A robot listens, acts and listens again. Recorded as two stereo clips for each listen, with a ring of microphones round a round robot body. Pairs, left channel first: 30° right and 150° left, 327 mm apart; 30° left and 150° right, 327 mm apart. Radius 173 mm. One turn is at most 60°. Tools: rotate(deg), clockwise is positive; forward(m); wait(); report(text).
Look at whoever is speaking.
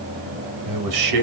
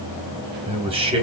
rotate(-60)
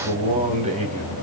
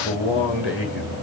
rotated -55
rotate(-60)
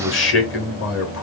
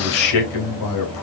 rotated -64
rotate(-20)
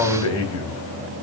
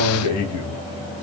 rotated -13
report("Found it: a man speaking, straight ahead.")